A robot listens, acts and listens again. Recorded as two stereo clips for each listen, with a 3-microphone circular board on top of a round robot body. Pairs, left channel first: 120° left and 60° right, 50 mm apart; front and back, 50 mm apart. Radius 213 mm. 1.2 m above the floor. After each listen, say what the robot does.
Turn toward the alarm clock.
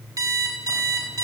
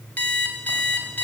Turn 65° right.
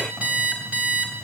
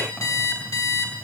Found it: an alarm clock, straight ahead.